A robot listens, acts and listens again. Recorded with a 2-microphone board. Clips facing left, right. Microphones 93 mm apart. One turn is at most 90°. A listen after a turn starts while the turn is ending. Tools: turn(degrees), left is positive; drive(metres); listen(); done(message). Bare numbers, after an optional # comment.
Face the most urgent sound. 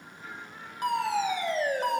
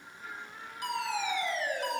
# The fire alarm: about 50° left or 130° left.
turn(50)
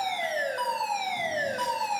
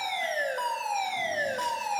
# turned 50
done("Facing the fire alarm.")